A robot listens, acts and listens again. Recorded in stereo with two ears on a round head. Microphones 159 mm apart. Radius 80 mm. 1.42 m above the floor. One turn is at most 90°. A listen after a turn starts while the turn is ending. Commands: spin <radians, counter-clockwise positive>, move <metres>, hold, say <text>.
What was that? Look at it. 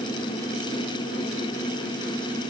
hold
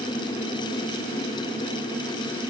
hold
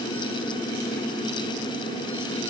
say I can't make out anything.